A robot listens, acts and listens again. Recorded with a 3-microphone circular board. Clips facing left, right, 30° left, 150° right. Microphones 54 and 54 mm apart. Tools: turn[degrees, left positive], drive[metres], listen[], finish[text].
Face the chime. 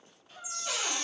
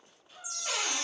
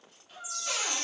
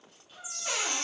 Thought: The chime: 155° left.
Action: turn[155]
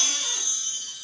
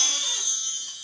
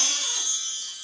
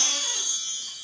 Thought: The chime is now 50° left.
Action: turn[50]
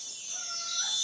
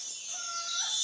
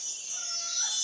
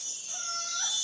Action: finish[Facing the chime, under 1 m away.]